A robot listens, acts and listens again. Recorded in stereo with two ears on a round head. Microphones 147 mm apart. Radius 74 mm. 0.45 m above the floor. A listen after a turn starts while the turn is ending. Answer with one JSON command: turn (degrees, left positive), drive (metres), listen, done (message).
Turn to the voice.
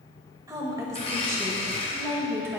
{"turn": -15}
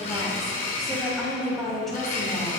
{"turn": 30}
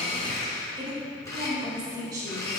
{"turn": -25}
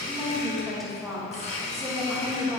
{"done": "Facing the woman speaking."}